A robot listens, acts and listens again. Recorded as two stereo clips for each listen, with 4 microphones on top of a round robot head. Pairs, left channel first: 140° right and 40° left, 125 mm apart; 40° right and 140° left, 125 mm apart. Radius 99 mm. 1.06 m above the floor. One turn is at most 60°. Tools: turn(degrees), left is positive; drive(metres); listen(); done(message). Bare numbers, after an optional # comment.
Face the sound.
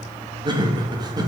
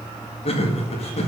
# The laughter: 15° right.
turn(-15)
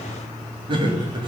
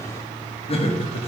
done("Found it: laughter, straight ahead.")